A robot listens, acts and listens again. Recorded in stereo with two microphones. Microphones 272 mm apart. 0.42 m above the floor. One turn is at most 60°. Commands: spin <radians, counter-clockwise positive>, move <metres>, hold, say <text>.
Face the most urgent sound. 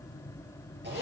hold
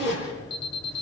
spin 0.35
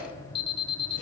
spin 1.05
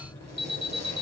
spin 1.05
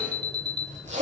spin 0.79
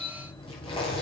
say Found it: an alarm, straight ahead, 1 to 2 m away.